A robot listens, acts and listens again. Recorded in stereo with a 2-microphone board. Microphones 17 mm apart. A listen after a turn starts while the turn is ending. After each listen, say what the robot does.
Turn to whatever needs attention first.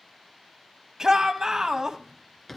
Turn 35° right.
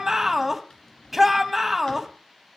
Found it: a shout, straight ahead, 1 to 2 m away.